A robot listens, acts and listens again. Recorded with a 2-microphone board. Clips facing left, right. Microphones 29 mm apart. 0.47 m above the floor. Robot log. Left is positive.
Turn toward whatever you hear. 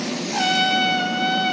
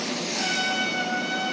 note: The trumpet: about 45° left or 135° left.
cmd yaw +45
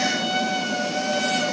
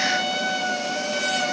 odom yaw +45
end: Facing the trumpet, 2 to 4 m away.